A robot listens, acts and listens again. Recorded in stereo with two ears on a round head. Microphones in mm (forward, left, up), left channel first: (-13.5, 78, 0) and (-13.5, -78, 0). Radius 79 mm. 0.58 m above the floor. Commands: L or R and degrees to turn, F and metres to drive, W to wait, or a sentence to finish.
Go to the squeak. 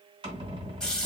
R30
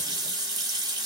W
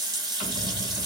R120
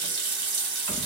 R35
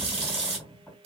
F1.0
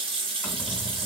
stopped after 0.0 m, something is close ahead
Something is in my way. I am facing the squeak but have not reached it.